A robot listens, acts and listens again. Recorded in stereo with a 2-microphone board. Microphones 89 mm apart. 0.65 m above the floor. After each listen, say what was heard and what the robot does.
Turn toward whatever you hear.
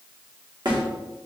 The snare drum: about 55° right or 125° right. Turn 55° right.
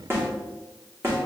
So it is at 40° right. Turn 40° right.
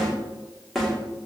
Facing the snare drum.